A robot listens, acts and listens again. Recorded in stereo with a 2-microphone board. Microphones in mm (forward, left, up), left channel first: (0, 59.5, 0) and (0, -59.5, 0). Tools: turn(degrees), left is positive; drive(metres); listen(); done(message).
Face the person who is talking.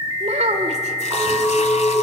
turn(degrees=-75)
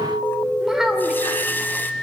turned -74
done("Facing the child speaking.")